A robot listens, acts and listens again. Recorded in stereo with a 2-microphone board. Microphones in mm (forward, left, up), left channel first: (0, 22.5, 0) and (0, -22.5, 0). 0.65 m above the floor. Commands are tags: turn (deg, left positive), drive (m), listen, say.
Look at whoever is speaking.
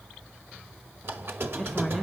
<turn deg="30"/>
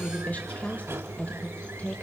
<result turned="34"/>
<turn deg="140"/>
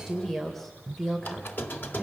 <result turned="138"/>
<say>Found it: a woman speaking, straight ahead, 2 to 4 m away.</say>